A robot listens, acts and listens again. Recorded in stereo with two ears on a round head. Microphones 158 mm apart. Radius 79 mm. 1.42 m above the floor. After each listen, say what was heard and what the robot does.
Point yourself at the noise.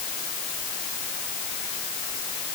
Keep listening.
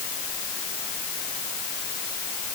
Keep listening.
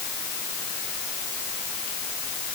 I can't make out anything.